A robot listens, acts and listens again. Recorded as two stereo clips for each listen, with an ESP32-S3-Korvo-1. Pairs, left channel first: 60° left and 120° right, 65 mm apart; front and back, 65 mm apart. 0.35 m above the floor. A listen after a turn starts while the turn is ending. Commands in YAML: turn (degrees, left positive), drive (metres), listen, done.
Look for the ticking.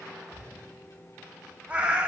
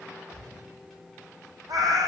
listen: true
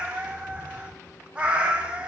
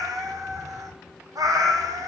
listen: true
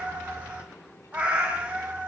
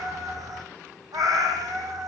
done: "I can't make out ticking to turn to."